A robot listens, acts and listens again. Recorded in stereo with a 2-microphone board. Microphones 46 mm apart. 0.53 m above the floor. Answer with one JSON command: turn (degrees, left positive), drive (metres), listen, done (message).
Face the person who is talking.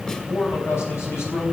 {"turn": 75}
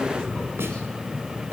{"listen": true}
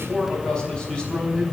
{"turn": 20}
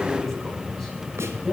{"listen": true}
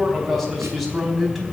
{"done": "Found it: a man speaking, straight ahead, over 4 m away."}